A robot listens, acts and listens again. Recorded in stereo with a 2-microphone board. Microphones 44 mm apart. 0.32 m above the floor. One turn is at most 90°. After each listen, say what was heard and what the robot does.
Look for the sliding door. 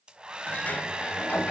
The sliding door: about 35° left or 145° left. Turn 35° left.
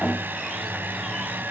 So it is at 10° left. Turn 10° left.
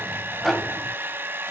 Facing the sliding door.